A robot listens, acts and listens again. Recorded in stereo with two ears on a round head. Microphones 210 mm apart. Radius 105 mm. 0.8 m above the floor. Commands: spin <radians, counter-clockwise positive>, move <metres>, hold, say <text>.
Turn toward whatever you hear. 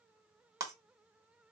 spin -0.52
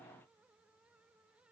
hold
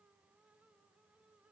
say I heard breaking glass, but can't make it out now. It was about 15° left or 135° right.